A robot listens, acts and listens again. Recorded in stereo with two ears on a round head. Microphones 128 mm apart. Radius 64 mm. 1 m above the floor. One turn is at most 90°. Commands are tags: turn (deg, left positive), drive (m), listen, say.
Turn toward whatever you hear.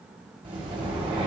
<turn deg="-35"/>
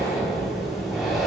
<say>Facing the breathing.</say>